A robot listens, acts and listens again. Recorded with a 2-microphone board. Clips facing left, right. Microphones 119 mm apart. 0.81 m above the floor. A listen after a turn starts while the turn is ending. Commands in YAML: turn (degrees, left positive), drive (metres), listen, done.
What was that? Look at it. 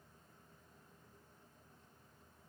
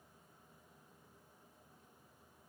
listen: true
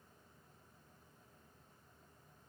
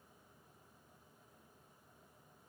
listen: true
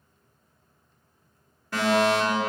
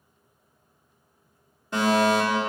turn: -20
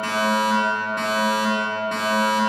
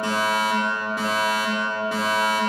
done: "Found it: a fire alarm, straight ahead, 2 to 4 m away."